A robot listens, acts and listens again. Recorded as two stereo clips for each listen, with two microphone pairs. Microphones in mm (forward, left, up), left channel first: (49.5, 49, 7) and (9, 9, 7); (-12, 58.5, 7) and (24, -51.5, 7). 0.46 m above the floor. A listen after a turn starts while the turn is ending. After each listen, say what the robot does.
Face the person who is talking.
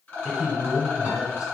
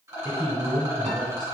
Turn 150° left.
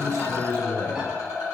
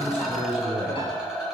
Facing the man speaking.